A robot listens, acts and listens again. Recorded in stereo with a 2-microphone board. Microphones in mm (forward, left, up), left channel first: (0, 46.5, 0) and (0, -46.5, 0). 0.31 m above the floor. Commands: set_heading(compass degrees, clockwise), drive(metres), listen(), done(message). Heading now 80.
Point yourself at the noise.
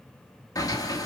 set_heading(40)
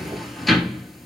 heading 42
done("Facing the sliding door, 1 to 2 m away.")